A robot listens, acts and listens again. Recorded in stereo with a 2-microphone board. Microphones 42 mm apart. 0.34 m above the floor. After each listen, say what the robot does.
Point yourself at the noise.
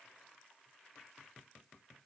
Keep listening.
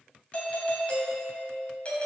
Turn 30° left.
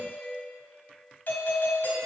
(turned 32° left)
Turn 110° left.
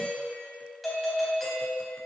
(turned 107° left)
Facing the doorbell, 2 to 4 m away.